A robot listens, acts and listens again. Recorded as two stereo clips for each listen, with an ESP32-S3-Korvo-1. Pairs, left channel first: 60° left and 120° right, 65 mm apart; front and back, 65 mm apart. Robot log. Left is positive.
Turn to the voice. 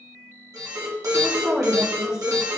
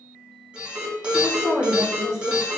note: The woman speaking: 40° right.
cmd yaw -40
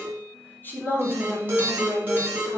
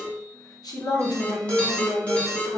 end: Found it: a woman speaking, straight ahead, 1 to 2 m away.